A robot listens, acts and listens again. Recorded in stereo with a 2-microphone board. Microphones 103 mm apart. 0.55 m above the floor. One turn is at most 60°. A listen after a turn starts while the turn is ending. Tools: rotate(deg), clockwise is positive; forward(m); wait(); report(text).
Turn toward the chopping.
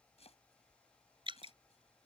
rotate(-60)
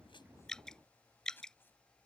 rotate(-20)
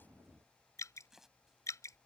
report("Found it: chopping, straight ahead.")